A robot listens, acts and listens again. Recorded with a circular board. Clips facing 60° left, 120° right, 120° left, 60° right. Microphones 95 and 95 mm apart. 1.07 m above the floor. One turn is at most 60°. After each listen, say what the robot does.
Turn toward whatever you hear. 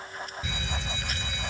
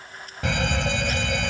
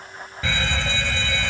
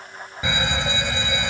Turn 60° right.
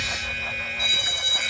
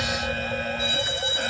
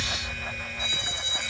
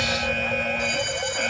Turn 60° right.
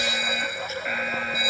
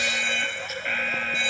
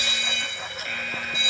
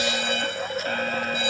Turn 20° right.
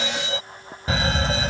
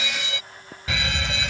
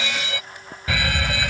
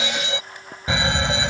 Facing the fire alarm.